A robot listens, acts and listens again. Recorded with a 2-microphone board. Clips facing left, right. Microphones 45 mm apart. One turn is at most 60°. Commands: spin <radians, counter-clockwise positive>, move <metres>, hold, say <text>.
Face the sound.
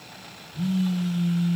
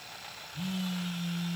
spin -1.05
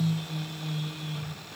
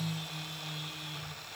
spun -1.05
spin -0.26
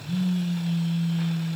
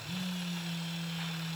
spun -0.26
say Found it: a phone buzzing, straight ahead, 2 to 4 m away.